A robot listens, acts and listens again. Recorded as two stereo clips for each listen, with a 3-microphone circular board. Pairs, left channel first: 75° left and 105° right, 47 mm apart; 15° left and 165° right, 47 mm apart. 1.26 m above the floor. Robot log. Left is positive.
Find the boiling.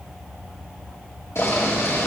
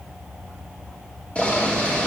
note: The boiling: 80° left.
cmd yaw +80
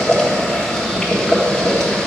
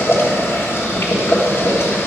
end: Found it: boiling, straight ahead, 1 to 2 m away.